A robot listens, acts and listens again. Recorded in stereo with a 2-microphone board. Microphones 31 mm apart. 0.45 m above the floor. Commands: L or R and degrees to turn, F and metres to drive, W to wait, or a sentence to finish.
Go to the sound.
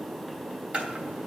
R40
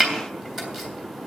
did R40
F1.0
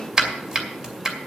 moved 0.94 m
R20
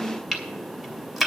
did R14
F1.0
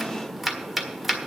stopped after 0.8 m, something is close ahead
I am next to the chopping.